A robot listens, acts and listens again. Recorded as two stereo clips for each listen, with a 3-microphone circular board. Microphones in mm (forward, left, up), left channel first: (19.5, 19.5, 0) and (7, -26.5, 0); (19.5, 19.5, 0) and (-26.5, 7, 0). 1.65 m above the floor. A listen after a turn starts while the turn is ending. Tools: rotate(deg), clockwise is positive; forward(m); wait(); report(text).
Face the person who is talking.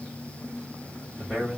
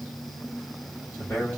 report("Found it: a man speaking, straight ahead, 2 to 4 m away.")